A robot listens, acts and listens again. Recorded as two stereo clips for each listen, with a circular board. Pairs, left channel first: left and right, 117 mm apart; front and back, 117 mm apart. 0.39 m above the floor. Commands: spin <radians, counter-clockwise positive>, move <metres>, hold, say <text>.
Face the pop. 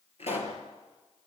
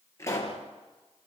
spin 1.13
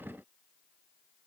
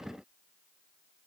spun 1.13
say I heard a pop from this way, but can't make it out now.